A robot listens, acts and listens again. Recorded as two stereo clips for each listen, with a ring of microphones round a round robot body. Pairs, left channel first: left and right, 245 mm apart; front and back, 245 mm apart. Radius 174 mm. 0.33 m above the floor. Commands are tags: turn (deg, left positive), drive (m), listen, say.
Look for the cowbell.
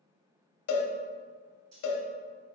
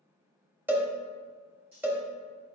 <turn deg="100"/>
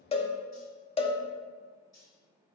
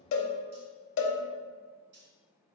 <turn deg="25"/>
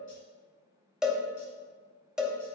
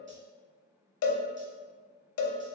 <say>Found it: a cowbell, straight ahead, under 1 m away.</say>